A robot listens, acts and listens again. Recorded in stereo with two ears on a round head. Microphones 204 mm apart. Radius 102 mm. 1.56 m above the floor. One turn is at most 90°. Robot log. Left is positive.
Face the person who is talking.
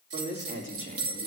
note: The man speaking: about 40° right or 140° right.
cmd yaw -40
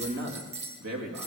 note: So it is at 100° right.
cmd yaw -90
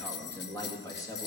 note: The man speaking is now 15° left.
cmd yaw +15
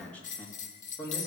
note: The man speaking is now 15° left.
cmd yaw +15
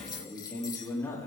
note: The man speaking is now 10° left.
cmd yaw +10
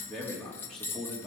end: Facing the man speaking, 2 to 4 m away.